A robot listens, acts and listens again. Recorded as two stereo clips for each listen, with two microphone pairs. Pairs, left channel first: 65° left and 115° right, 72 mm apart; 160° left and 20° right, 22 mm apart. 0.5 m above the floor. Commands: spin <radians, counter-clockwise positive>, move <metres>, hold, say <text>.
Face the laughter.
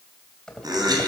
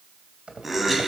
spin -1.92
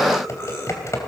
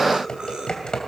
spin 0.17
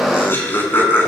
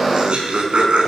say Facing the laughter, over 4 m away.